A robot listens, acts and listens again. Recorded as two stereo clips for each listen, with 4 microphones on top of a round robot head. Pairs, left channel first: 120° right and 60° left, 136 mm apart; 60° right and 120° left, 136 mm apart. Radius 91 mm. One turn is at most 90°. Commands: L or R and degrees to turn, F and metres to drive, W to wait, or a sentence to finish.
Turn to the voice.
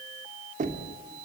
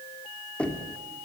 W
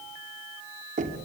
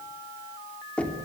W
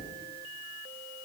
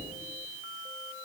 I can't make out anyone speaking to turn to.